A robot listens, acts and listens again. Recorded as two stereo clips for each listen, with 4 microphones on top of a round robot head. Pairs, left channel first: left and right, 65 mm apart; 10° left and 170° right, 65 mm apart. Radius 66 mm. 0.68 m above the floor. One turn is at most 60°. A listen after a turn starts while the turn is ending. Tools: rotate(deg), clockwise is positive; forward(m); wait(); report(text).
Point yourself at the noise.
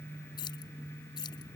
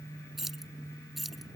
rotate(-60)
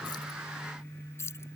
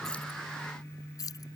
rotate(-40)
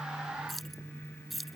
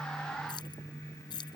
report("Found it: keys jangling, straight ahead.")